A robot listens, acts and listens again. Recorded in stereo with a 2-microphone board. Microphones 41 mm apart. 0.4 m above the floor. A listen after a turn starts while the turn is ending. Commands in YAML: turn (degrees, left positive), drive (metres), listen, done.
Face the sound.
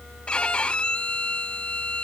turn: 25
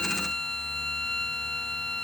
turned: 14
turn: 15
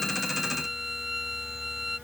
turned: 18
done: "Facing the violin."